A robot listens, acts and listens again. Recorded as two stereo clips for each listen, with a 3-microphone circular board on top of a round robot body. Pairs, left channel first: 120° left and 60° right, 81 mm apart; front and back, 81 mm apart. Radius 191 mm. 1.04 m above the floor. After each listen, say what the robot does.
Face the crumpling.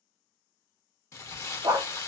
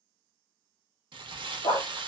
Turn 170° left.
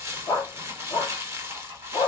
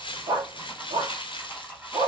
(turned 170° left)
Found it: crumpling, straight ahead, 1 to 2 m away.